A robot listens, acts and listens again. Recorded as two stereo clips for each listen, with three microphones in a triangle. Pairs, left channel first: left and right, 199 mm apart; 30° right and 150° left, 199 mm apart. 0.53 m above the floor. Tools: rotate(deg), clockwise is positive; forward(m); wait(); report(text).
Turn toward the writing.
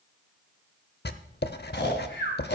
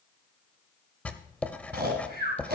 rotate(-50)
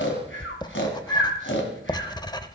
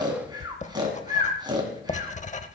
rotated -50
rotate(-20)
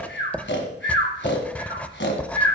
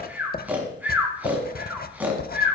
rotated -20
report("Facing the writing.")